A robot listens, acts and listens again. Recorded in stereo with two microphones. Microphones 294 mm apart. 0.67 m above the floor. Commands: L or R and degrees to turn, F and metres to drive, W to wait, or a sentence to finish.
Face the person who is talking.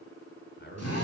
L40
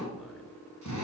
W
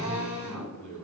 L15
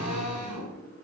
W
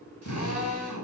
W
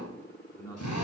L10
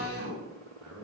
Found it: a man speaking, straight ahead, over 4 m away.